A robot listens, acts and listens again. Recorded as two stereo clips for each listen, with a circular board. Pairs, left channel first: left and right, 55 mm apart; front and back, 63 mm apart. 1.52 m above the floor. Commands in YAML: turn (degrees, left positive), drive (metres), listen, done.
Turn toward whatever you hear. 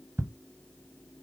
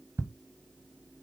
turn: -130
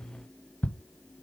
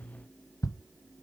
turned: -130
turn: 25
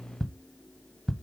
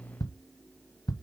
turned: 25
done: "Facing the ticking."